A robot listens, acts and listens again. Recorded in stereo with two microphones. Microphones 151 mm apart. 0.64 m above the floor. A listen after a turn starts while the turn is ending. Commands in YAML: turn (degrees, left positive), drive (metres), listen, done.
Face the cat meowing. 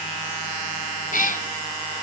turn: 65
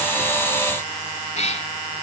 turn: 50
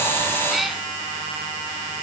done: "Found it: a cat meowing, straight ahead."